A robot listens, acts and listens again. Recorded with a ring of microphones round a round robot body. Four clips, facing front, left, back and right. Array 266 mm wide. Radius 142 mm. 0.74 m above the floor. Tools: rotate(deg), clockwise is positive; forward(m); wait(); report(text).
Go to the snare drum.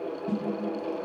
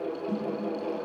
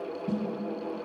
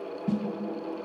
rotate(90)
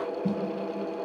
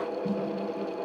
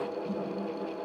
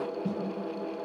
rotate(25)
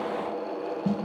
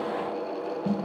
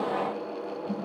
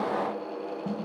forward(1.0)
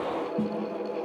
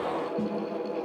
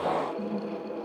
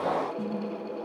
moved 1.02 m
rotate(-10)
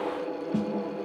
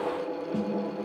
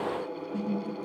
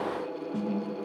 forward(1.0)
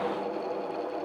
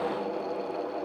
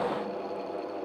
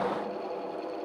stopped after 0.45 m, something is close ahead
wait()
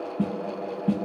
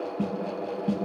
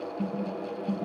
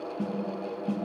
rotate(-10)
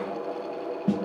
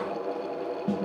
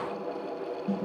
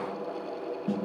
report("Arrived at the snare drum, straight ahead.")